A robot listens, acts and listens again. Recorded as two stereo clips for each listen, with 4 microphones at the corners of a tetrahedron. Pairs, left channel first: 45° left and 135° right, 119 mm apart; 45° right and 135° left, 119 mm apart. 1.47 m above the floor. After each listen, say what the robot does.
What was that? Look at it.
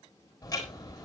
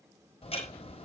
Turn 15° right.
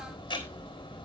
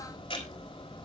Facing the ticking.